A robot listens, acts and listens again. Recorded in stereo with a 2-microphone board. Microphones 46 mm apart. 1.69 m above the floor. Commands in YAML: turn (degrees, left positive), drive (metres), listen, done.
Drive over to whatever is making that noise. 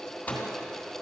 turn: 35
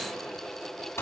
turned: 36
turn: 105
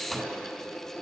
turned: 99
drive: 1.0
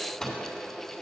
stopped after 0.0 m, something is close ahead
turn: 15
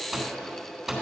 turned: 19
done: "Something is in my way. I am facing the microwave but have not reached it."